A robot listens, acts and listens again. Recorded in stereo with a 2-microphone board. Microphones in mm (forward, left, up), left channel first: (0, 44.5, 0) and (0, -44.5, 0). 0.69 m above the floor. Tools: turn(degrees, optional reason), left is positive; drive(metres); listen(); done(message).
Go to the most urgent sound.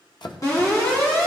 turn(degrees=40, reason="The alarm: about 40° left or 140° left.")
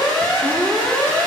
turn(degrees=100, reason="So it is at 100° left.")
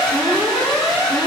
drive(metres=1.0)
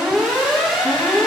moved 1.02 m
drive(metres=1.0)
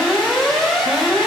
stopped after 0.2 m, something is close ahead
done("Blocked. The alarm is further on, straight ahead.")